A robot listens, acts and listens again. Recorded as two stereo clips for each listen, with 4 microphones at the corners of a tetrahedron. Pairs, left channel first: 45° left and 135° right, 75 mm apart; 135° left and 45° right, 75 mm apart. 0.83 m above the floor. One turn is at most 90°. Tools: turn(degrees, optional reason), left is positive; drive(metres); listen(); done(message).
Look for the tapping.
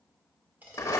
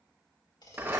turn(degrees=90, reason="The tapping: 160° left.")
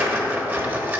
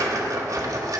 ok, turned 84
turn(degrees=75, reason="Nothing new. It was at 75° left.")
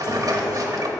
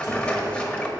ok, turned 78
listen()
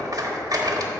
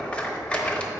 done("I heard tapping from this way, but can't make it out now.")